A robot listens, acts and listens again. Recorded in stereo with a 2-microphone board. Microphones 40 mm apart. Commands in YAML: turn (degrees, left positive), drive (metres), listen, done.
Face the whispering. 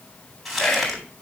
turn: 40
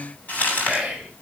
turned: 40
done: "Found it: whispering, straight ahead, 1 to 2 m away."